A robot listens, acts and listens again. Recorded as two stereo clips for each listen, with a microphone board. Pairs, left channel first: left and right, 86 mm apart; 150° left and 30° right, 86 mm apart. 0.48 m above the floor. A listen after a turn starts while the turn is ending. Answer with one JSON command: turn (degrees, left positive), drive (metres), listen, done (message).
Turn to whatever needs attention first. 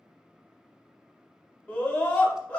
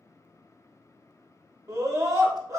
{"turn": 20}
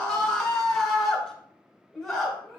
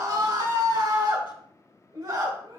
{"done": "Facing the scream, 1 to 2 m away."}